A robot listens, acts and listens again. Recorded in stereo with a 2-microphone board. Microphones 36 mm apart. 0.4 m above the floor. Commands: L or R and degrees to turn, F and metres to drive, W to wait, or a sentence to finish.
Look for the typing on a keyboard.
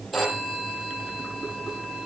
W
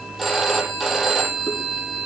W
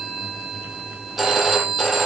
I can't make out typing on a keyboard, only a phone ringing.